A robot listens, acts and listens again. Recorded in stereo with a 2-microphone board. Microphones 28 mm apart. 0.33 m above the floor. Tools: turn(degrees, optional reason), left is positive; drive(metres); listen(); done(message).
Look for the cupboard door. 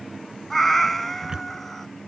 turn(degrees=-30, reason="The cupboard door: about 30° right or 150° right.")
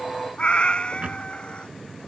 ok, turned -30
turn(degrees=-120, reason="So it is at 120° right.")
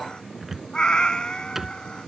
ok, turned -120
turn(degrees=-10, reason="The cupboard door is now 10° right.")
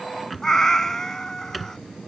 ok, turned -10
done("Found it: a cupboard door, straight ahead.")